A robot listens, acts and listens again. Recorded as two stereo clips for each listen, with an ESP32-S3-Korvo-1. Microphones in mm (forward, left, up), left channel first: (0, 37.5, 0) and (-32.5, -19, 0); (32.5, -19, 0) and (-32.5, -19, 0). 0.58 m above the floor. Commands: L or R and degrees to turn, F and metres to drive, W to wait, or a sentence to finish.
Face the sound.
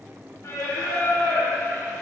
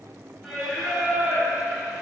L100
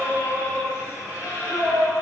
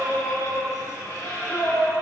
L30
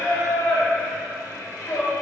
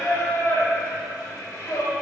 L25
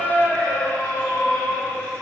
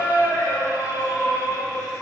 Facing the singing, 2 to 4 m away.